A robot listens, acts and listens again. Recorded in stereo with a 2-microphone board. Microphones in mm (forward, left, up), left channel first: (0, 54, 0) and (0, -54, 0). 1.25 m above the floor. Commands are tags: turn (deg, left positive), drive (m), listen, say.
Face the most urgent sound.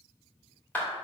<listen/>
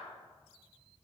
<listen/>
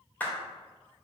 <say>I can't make out anything urgent to turn to.</say>